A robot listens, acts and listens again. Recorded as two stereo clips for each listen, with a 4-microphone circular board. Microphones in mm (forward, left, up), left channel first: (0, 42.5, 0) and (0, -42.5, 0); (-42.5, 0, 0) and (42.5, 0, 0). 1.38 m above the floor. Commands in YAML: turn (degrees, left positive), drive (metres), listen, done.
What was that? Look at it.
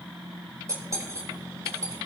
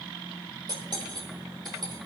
turn: -35
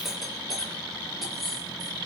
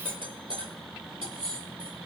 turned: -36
done: "Facing the cutlery clinking, 2 to 4 m away."